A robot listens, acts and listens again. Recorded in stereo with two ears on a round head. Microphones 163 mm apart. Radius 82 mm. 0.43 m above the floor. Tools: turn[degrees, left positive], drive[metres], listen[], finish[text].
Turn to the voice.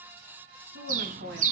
Thought: The woman speaking: about 65° right or 115° right.
Action: turn[-65]
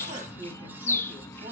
Thought: So it is at 40° right.
Action: turn[-40]
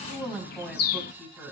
Action: finish[Facing the woman speaking, 2 to 4 m away.]